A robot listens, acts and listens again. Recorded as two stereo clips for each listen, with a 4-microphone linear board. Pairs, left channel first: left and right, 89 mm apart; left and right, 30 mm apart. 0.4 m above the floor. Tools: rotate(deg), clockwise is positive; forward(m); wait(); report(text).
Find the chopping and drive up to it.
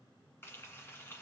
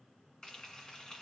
wait()
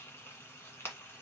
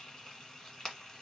wait()
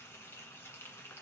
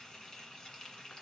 report("I can't make out chopping, only frying.")